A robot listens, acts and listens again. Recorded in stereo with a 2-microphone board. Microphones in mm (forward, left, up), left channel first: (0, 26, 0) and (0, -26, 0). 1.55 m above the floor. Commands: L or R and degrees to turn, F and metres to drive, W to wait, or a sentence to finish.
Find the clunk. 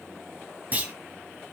R35
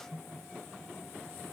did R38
W
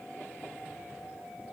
I heard a clunk, but can't make it out now. It was about 5° left or 110° right.